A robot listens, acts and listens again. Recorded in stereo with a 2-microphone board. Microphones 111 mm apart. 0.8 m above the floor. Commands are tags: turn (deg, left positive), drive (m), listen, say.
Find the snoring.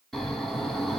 <turn deg="30"/>
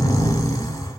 <turn deg="145"/>
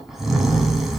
<say>Facing the snoring, 1 to 2 m away.</say>